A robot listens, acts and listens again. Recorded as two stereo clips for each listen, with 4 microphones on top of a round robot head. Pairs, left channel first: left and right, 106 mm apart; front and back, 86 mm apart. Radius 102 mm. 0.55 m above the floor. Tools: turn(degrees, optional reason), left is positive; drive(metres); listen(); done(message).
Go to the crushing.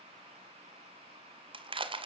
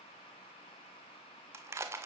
turn(degrees=-120, reason="The crushing: 120° right.")
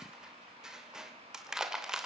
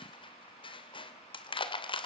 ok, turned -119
drive(metres=1.0)
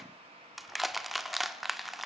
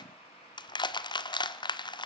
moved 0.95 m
drive(metres=1.0)
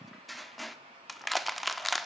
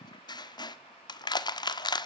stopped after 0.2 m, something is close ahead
done("Arrived at the crushing, straight ahead.")